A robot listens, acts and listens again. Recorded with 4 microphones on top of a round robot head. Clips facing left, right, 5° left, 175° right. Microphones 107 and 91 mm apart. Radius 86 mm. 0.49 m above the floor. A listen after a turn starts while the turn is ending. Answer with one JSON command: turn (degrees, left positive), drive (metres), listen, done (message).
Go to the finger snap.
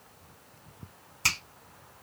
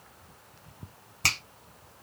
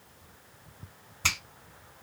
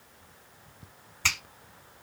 {"turn": -70}
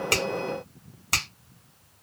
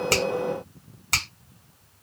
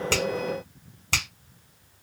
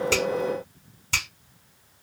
{"drive": 1.0}
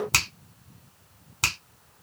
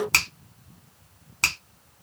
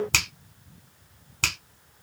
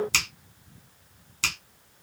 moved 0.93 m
{"turn": 10}
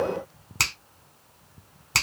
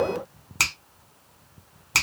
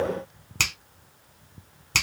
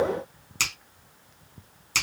{"drive": 1.0}
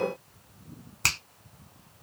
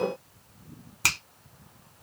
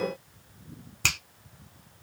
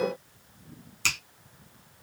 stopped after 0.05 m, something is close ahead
{"done": "Arrived at the finger snap, straight ahead."}